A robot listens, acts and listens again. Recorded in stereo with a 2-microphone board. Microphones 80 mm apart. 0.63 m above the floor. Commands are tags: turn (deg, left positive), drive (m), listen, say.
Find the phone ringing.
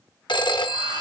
<turn deg="75"/>
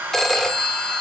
<say>Facing the phone ringing.</say>